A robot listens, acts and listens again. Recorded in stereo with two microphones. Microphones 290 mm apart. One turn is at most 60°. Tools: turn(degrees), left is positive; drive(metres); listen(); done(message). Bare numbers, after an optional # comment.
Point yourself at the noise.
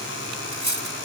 turn(-60)
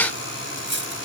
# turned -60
# So it is at 40° right.
turn(-40)
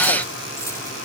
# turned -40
listen()
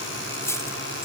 # The cutlery clinking is now 10° left.
turn(10)
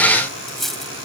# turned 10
done("Facing the cutlery clinking.")